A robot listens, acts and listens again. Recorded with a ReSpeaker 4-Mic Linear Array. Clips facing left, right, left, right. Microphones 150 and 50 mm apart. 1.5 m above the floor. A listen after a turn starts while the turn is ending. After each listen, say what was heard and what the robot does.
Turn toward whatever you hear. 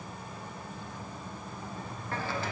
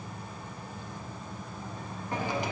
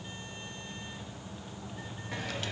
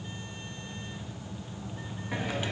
The hiss: about 15° right or 165° right. Turn 15° right.
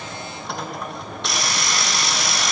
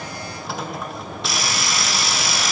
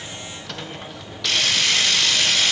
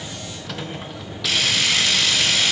Found it: a hiss, straight ahead, 1 to 2 m away.